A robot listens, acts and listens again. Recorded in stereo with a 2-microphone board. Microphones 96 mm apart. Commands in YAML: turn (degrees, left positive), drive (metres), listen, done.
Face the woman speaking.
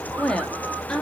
turn: 30
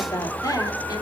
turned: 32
turn: 140
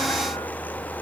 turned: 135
listen: true
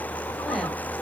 listen: true
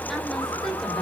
done: "Facing where the woman speaking came from. I can't hear it now."